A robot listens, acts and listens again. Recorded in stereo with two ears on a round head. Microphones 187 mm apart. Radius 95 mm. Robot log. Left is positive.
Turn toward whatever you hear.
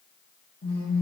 note: The phone buzzing: about 50° left or 130° left.
cmd yaw +50
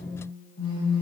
note: So it is at 80° left.
cmd yaw +80
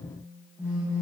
note: The phone buzzing is now 10° right.
cmd yaw -10
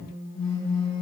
end: Facing the phone buzzing, over 4 m away.